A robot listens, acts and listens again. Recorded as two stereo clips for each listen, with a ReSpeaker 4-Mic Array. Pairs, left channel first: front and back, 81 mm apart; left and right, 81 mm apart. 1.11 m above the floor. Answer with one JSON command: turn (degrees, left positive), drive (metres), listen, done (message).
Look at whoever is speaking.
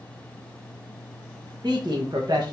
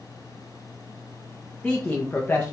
{"turn": 155}
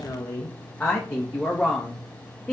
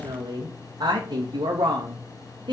{"turn": -90}
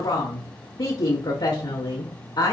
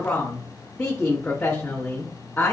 {"turn": 20}
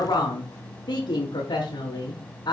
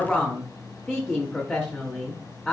{"done": "Found it: a woman speaking, straight ahead."}